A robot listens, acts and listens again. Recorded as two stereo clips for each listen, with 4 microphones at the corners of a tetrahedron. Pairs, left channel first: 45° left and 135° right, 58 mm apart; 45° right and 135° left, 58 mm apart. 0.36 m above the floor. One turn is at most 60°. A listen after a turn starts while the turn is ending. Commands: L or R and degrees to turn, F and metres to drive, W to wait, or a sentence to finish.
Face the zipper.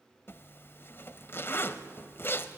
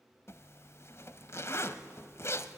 Facing the zipper, under 1 m away.